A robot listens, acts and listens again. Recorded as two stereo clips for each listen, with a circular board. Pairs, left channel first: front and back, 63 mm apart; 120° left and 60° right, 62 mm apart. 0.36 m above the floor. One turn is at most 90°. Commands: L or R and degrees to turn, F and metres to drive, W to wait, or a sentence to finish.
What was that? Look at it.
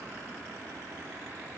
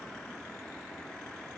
W
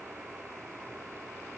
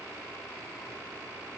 W
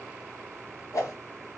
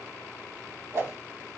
R25
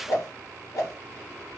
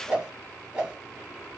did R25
L10
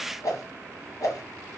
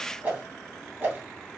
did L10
Found it: a whoosh, straight ahead, 1 to 2 m away.